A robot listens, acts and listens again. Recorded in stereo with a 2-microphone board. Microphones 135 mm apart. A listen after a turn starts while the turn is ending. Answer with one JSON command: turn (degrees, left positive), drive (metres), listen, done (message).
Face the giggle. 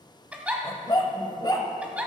{"turn": -30}
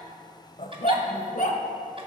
{"listen": true}
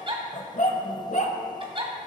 {"turn": -135}
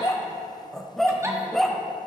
{"listen": true}
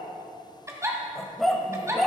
{"turn": -25}
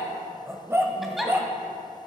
{"done": "Facing the giggle."}